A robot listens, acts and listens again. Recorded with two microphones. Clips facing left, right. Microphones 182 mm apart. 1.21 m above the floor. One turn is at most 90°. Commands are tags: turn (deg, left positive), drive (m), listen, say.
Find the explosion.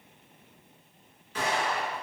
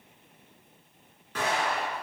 <turn deg="-55"/>
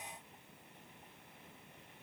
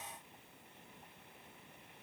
<listen/>
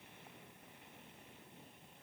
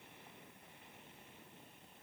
<say>I heard an explosion, but can't make it out now. It was about straight ahead or 70° right.</say>